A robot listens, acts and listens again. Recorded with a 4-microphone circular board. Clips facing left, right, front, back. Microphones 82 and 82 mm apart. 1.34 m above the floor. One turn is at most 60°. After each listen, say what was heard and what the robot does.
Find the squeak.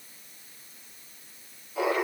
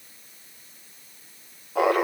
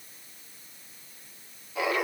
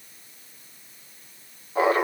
Keep listening.
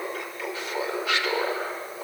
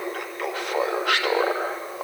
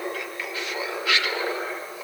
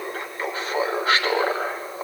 Keep listening.
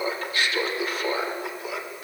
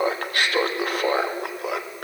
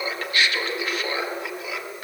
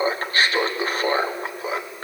I can't make out a squeak to turn to.